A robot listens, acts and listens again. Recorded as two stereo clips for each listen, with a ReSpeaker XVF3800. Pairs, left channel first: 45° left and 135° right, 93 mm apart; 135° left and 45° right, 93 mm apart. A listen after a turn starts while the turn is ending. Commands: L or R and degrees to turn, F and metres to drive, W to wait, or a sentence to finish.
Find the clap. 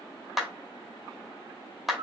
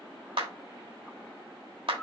R45
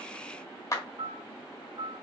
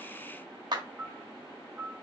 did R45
R10
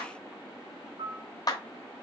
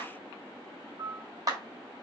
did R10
Found it: a clap, straight ahead, 1 to 2 m away.